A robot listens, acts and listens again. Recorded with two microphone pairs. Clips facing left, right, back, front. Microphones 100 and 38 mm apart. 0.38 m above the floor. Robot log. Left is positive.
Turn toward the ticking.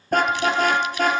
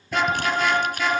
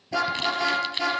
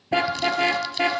cmd idle
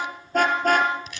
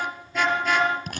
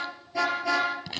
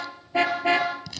cmd idle
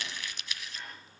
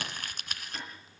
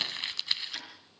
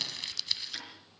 note: The ticking: 90° right.
cmd yaw -90
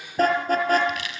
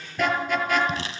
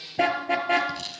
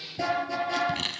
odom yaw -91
cmd idle
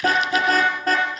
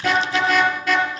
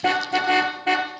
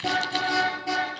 cmd idle
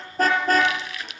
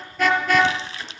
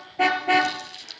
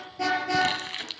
end: I heard ticking from this way, but can't make it out now.